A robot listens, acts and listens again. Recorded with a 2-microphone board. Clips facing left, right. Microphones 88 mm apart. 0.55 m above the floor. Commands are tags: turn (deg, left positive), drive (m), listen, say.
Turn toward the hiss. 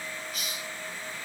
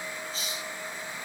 <turn deg="-30"/>
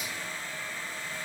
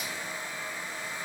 <listen/>
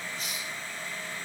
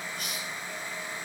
<turn deg="-115"/>
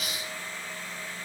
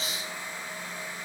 <turn deg="-30"/>
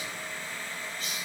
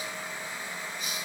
<turn deg="-15"/>
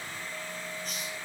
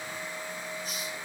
<listen/>
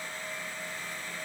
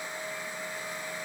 <listen/>
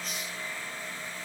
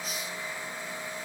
<say>I heard a hiss from this way, but can't make it out now.</say>